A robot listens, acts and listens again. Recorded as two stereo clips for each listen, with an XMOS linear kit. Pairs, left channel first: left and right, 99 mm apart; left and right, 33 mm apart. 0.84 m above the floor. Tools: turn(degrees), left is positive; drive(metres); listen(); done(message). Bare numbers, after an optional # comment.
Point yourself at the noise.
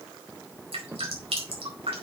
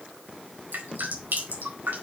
# The dripping: about 75° right or 105° right.
turn(-75)
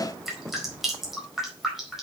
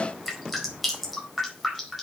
done("Found it: dripping, straight ahead.")